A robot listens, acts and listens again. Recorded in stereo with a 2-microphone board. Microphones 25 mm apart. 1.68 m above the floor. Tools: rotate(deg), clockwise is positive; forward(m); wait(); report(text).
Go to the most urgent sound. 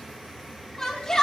rotate(-25)
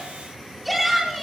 forward(1.0)
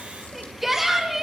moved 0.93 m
rotate(10)
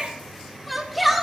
forward(1.0)
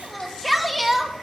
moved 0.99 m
forward(1.0)
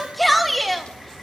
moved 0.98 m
forward(1.0)
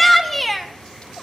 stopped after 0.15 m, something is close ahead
report("I am next to the shout.")